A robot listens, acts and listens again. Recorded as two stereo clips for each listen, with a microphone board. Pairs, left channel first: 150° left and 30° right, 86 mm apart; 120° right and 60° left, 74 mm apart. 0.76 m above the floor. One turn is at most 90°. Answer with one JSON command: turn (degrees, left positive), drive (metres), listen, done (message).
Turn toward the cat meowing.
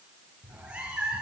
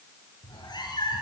{"turn": -90}
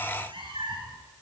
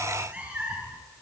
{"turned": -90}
{"turn": -15}
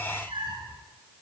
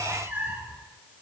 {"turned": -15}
{"done": "Found it: a cat meowing, straight ahead."}